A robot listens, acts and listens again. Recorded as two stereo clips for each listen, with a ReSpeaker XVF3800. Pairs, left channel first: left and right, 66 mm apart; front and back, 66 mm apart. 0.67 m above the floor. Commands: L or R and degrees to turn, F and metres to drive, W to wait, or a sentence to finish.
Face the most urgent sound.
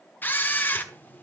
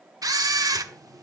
W
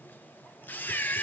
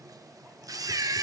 W
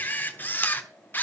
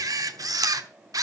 I can't make out anything urgent, only a camera shutter.